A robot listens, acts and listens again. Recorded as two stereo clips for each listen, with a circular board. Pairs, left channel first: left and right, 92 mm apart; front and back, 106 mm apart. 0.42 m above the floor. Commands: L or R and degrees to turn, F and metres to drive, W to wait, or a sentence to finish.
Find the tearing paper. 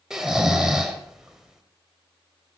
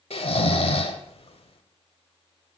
W
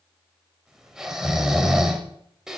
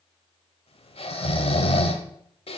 W
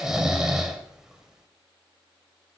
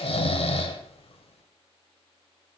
I can't make out tearing paper to turn to.